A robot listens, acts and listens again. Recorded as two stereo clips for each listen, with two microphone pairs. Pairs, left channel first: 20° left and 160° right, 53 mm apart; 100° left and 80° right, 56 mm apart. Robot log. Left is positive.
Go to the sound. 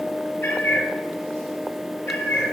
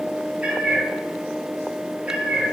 note: The cat meowing: 15° right.
cmd yaw -15
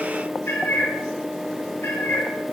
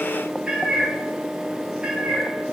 cmd fwd 1.0
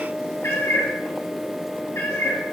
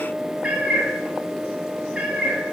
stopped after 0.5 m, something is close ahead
note: The cat meowing is now 10° right.
cmd yaw -10
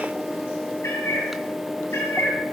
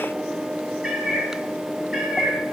end: Blocked. The cat meowing is further on, straight ahead.